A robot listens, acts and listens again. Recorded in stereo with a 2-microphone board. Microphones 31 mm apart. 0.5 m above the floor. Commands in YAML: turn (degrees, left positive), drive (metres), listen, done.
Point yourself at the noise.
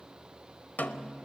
turn: 90
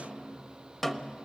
turn: 10
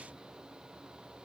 listen: true
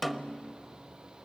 done: "Found it: a snare drum, straight ahead, under 1 m away."